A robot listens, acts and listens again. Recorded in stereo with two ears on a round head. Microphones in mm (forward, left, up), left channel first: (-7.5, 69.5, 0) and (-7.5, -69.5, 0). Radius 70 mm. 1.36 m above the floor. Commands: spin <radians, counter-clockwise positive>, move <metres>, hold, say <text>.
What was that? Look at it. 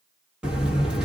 spin -0.52
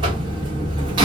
spin -2.53
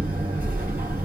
spin -0.17
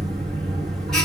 say Found it: a buzzer, straight ahead, 1 to 2 m away.